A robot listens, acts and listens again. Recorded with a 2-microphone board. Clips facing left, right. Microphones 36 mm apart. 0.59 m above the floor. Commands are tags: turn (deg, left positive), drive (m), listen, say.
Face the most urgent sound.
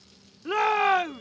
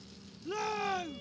<turn deg="50"/>
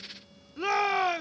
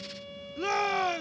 <turn deg="15"/>
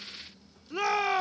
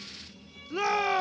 <say>Facing the shout.</say>